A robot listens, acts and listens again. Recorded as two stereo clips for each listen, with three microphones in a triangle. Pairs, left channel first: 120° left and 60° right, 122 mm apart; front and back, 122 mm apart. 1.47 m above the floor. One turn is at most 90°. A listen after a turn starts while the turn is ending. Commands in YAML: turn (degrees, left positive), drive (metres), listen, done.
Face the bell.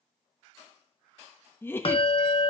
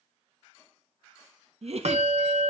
turn: 90
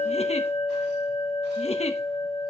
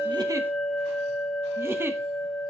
turn: 85
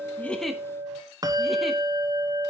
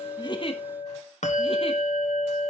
done: "Facing the bell, 1 to 2 m away."